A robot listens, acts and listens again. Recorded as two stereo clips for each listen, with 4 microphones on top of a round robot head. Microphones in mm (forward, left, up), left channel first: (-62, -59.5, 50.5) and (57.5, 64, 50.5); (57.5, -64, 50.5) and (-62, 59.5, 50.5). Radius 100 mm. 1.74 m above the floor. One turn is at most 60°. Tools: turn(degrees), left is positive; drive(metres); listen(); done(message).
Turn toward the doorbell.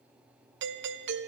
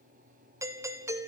turn(degrees=60)
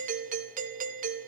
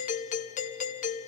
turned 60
done("Facing the doorbell, 1 to 2 m away.")